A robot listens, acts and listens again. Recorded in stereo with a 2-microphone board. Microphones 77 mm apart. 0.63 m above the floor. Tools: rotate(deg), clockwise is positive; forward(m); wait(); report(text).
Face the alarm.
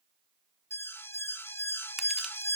rotate(-30)
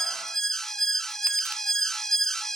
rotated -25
report("Facing the alarm.")